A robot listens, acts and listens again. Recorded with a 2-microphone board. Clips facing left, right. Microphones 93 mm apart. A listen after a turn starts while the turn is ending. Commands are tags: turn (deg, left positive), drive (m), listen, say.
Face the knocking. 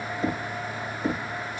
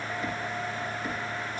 <turn deg="35"/>
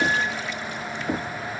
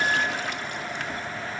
<turn deg="110"/>
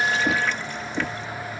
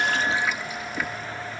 <turn deg="25"/>
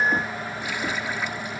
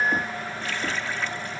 <listen/>
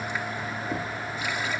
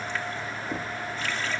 <listen/>
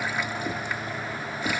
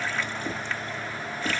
<say>Facing the knocking.</say>